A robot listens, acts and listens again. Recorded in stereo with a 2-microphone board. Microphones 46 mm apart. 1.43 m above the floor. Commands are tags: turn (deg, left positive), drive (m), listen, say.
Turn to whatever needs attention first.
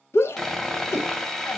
<turn deg="65"/>
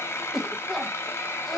<say>Found it: a shout, straight ahead.</say>